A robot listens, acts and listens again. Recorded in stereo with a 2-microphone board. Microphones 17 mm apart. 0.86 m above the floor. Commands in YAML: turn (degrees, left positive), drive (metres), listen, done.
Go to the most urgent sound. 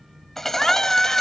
turn: 35
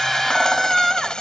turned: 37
drive: 1.0
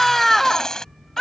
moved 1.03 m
turn: 10
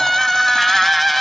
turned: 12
drive: 1.0
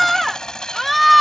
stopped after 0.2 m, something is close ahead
done: "I am next to the scream."